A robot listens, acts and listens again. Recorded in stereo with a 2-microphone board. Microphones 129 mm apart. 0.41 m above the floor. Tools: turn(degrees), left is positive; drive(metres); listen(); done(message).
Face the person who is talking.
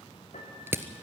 listen()
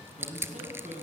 turn(degrees=-70)
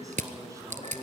turn(degrees=-30)
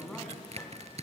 done("Facing the man speaking.")